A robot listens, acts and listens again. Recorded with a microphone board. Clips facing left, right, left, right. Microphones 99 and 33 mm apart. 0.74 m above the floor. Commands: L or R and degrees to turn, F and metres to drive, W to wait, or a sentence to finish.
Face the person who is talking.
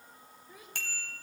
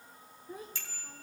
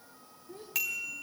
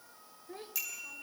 R40
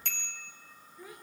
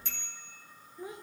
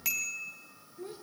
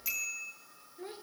R25
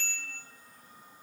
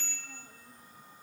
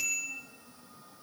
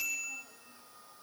W
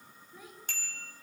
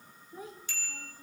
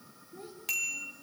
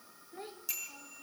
R35
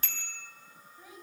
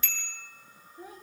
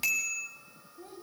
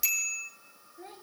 R40
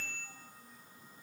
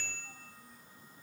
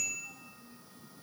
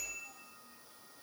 W
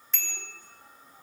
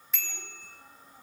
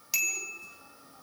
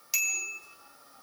W
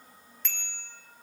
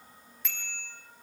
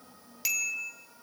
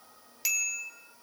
I heard a child speaking from this way, but can't make it out now.